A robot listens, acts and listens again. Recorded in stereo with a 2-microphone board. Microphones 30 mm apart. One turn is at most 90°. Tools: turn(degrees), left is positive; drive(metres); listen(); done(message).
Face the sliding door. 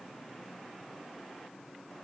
listen()
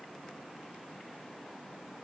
listen()
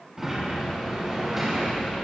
turn(degrees=-30)
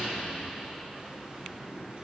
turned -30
turn(degrees=-90)
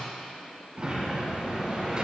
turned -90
turn(degrees=-35)
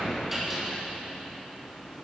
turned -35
done("Facing the sliding door.")